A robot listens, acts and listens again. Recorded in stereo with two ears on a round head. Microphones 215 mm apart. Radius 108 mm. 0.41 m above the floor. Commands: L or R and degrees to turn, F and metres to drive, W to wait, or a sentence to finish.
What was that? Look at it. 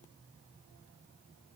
W
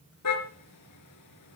L90
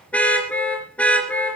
Found it: a car horn, straight ahead, 2 to 4 m away.